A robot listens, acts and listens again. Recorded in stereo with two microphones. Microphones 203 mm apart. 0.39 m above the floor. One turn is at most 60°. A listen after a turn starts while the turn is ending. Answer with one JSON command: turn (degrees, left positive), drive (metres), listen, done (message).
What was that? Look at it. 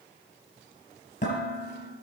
{"turn": 40}
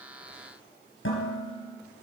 {"turn": 60}
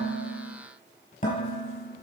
{"turn": 40}
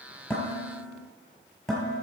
{"done": "Facing the dishes clattering, over 4 m away."}